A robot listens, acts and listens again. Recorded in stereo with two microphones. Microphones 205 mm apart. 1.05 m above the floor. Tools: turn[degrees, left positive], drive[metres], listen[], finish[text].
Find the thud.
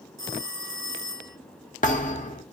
Thought: The thud: about 40° left or 140° left.
Action: turn[40]
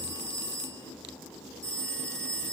Action: listen[]
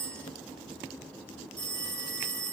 Action: finish[I heard a thud, but can't make it out now. It was about straight ahead or 100° left.]